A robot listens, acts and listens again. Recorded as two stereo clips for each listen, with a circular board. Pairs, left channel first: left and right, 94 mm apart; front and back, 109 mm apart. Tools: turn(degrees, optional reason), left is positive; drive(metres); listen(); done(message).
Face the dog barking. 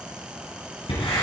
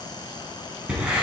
listen()
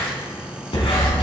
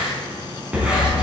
turn(degrees=70, reason="The dog barking: 70° left.")
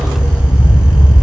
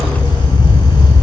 turn(degrees=45, reason="The dog barking is now 45° left.")
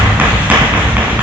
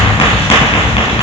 turn(degrees=15, reason="The dog barking is now 15° left.")
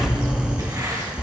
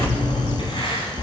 turn(degrees=10, reason="The dog barking is now 10° left.")
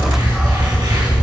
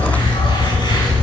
done("Found it: a dog barking, straight ahead.")